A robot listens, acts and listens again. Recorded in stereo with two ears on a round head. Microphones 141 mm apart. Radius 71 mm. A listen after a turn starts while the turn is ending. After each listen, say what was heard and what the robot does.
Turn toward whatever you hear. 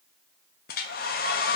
The hair dryer: about 65° left or 115° left. Turn 65° left.
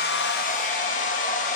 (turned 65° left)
So it is at 50° left. Turn 50° left.
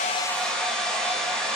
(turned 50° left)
Found it: a hair dryer, straight ahead.